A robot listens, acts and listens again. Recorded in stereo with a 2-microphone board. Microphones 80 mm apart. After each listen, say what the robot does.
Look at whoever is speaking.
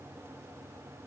Keep listening.
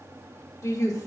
Turn 40° left.
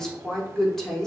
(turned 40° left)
Found it: a woman speaking, straight ahead, 1 to 2 m away.